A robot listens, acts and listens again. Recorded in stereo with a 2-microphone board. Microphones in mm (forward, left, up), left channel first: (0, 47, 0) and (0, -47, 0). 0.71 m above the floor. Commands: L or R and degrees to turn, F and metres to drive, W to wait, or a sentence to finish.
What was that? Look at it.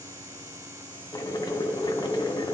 L50
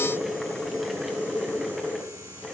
Found it: boiling, straight ahead.